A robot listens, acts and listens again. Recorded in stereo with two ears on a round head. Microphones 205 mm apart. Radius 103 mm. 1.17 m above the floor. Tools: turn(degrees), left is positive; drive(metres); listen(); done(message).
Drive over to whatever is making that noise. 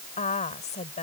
turn(degrees=30)
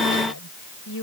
turn(degrees=120)
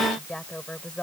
drive(metres=1.0)
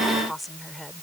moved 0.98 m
drive(metres=1.0)
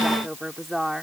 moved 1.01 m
drive(metres=1.0)
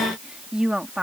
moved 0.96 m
drive(metres=1.0)
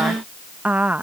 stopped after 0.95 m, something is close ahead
done("Arrived at the woman speaking, straight ahead.")